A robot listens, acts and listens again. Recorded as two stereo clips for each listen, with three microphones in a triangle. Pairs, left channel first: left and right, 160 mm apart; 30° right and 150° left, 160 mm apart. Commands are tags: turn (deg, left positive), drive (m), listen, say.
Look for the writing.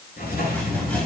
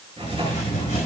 <turn deg="100"/>
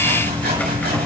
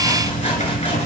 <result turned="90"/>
<turn deg="10"/>
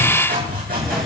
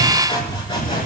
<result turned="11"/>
<say>Facing the writing.</say>